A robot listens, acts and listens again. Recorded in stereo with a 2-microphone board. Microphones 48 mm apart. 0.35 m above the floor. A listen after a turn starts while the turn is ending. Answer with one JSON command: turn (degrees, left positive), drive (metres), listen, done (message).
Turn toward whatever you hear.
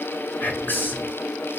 {"turn": 45}
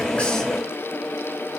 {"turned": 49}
{"listen": true}
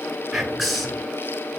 {"done": "Found it: whispering, straight ahead, over 4 m away."}